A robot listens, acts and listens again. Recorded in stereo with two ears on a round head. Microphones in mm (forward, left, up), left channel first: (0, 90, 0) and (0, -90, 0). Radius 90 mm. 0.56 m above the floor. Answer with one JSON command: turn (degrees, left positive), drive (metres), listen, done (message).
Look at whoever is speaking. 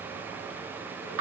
{"listen": true}
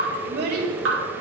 {"turn": -55}
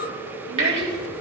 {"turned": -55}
{"turn": -65}
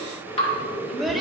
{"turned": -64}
{"done": "Found it: a child speaking, straight ahead, 1 to 2 m away."}